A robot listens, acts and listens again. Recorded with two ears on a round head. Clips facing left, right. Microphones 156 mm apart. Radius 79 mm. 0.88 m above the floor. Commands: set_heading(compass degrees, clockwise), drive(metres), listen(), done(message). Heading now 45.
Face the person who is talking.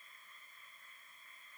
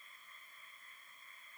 listen()
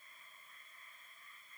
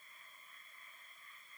listen()
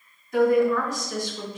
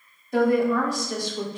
set_heading(75)
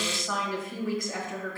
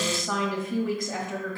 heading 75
set_heading(185)
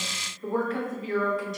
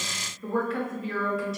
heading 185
done("Facing the woman speaking, 1 to 2 m away.")